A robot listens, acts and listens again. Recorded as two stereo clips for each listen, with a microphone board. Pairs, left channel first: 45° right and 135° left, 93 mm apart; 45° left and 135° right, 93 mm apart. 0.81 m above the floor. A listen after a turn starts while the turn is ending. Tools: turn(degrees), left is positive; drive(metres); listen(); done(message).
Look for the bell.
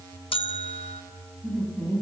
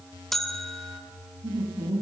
turn(degrees=-45)
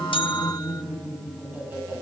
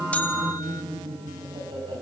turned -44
listen()
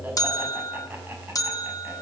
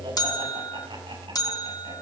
done("Found it: a bell, straight ahead.")